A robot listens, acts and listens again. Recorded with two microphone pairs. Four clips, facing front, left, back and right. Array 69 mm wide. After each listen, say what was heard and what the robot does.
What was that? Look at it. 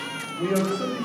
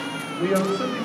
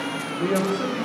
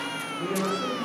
The man speaking: 85° left. Turn 85° left.
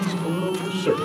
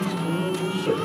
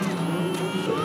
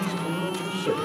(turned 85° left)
Found it: a man speaking, straight ahead, 2 to 4 m away.